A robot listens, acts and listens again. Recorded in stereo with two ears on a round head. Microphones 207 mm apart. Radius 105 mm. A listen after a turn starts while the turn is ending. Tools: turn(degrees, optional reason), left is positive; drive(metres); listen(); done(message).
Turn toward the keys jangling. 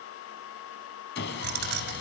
turn(degrees=-45, reason="The keys jangling: about 45° right or 135° right.")
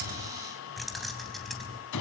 done("Found it: keys jangling, straight ahead, 2 to 4 m away.")